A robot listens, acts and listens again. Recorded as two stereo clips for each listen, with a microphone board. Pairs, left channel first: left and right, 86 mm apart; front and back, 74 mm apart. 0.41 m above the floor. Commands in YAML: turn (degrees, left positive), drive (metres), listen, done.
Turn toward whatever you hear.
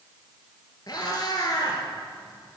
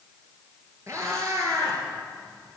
turn: 135
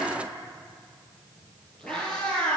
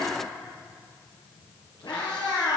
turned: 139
turn: 15
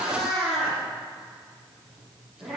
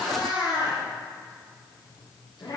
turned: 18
done: "Found it: a cat meowing, straight ahead."